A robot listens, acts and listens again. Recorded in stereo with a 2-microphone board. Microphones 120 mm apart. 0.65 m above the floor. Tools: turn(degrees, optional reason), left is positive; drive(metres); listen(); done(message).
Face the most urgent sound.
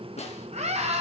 turn(degrees=-90)
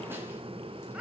turn(degrees=-10, reason="So it is at 10° right.")
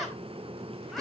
done("Found it: a scream, straight ahead, over 4 m away.")